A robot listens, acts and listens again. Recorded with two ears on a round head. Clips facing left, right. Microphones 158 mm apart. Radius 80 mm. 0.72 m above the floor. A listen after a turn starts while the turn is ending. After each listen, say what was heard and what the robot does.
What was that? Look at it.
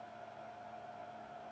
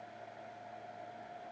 Keep listening.
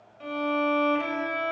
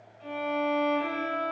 The violin: about 70° left or 110° left. Turn 70° left.
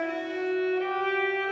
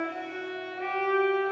So it is at 35° left. Turn 35° left.
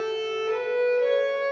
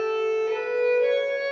Found it: a violin, straight ahead.